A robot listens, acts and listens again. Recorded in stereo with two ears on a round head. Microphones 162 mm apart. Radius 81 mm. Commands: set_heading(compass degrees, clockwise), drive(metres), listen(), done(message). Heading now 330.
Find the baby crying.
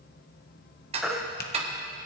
set_heading(300)
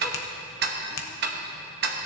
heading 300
listen()
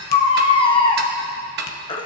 set_heading(150)
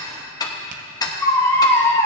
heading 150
set_heading(135)
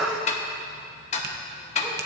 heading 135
done("Found it: a baby crying, straight ahead, under 1 m away.")